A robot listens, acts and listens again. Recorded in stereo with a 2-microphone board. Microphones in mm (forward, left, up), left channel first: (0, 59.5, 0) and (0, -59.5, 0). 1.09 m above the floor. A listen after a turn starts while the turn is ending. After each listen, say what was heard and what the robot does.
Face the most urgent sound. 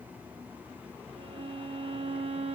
Keep listening.
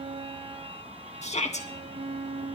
The shout: about 70° left or 110° left. Turn 70° left.
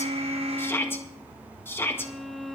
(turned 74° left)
So it is at 20° left. Turn 20° left.
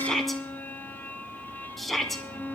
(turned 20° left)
Found it: a shout, straight ahead.